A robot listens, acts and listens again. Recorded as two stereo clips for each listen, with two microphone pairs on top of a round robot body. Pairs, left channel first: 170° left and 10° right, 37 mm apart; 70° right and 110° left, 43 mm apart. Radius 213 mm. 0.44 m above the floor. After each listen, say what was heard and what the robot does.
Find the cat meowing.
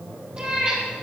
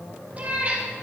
The cat meowing: 50° left. Turn 50° left.
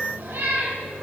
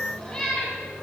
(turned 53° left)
Facing the cat meowing.